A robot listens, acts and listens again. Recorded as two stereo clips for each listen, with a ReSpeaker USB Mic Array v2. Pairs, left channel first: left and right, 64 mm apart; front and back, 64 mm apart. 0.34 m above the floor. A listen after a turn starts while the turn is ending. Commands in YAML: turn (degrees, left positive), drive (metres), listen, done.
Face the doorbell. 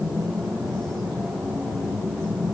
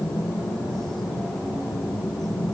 listen: true
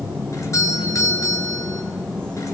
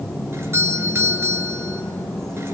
turn: 130
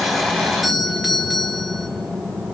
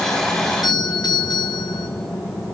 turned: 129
done: "Found it: a doorbell, straight ahead."